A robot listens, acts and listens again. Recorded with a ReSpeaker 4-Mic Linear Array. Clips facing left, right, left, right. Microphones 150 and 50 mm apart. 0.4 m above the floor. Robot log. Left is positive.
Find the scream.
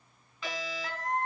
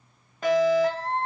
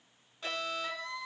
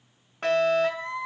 note: The scream: about 30° right or 150° right.
cmd yaw -30
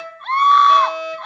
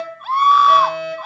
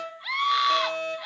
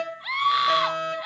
end: Found it: a scream, straight ahead, 1 to 2 m away.